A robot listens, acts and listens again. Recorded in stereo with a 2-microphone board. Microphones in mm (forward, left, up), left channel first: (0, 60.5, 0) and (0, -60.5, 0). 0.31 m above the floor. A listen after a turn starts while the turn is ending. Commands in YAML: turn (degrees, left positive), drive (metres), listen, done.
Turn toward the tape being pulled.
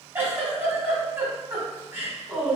listen: true
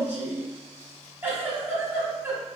listen: true
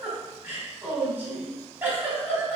done: "I can't make out tape being pulled to turn to."